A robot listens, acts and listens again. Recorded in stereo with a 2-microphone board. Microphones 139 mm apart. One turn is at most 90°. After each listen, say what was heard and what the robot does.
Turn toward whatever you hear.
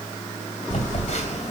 The phone buzzing: about 60° left or 120° left. Turn 60° left.
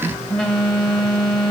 Facing the phone buzzing.